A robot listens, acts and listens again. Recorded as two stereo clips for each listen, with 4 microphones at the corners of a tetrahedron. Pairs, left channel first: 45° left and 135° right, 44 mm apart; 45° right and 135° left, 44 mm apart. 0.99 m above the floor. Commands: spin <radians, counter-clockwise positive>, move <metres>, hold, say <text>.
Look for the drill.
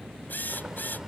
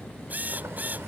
spin 1.48
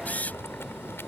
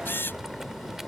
spin -0.17
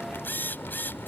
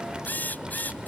say Facing the drill.